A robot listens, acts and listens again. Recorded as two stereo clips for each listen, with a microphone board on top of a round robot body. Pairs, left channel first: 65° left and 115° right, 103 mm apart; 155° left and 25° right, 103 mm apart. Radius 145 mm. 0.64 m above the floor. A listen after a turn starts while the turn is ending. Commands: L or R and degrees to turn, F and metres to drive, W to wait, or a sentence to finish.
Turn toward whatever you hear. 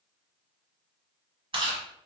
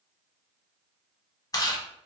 R145
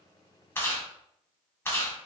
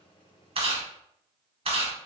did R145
Found it: chewing, straight ahead, 1 to 2 m away.